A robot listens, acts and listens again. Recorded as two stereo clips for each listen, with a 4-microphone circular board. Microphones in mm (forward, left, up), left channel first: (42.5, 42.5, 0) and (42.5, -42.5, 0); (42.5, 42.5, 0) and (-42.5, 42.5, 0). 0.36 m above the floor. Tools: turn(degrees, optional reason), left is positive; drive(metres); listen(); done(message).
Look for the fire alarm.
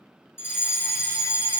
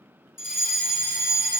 turn(degrees=145, reason="The fire alarm: 145° left.")
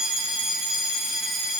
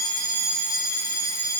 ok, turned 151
done("Facing the fire alarm, 2 to 4 m away.")